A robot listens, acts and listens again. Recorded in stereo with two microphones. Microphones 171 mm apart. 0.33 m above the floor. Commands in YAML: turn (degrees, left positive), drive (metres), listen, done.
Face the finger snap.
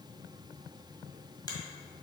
listen: true
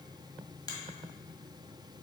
turn: 25
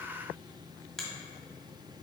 done: "Facing the finger snap, 1 to 2 m away."